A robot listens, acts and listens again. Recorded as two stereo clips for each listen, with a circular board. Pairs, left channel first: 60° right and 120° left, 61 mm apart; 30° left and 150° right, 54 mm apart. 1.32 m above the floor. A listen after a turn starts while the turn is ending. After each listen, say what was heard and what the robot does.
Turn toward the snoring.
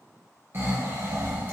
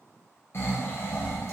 The snoring: 70° left. Turn 70° left.
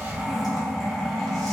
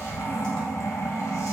The snoring is now 20° left. Turn 20° left.
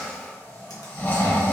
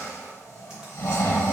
Facing the snoring.